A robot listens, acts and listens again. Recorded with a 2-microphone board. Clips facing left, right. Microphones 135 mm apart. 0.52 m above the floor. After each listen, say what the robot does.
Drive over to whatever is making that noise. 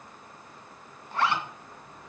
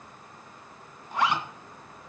Turn 30° right.
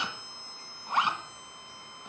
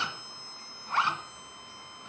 Turn 15° left.
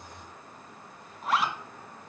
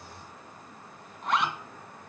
Drive 1.0 m forward.
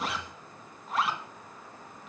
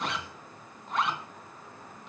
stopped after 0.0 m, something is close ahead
Something is in my way. I am facing the zipper but have not reached it.